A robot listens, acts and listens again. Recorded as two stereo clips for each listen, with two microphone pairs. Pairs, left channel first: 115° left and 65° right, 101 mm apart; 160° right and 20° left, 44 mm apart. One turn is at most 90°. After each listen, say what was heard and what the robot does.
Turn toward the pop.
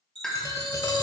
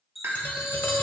The pop: 35° left. Turn 35° left.
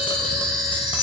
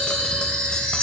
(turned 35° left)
Facing where the pop came from. I can't hear it now.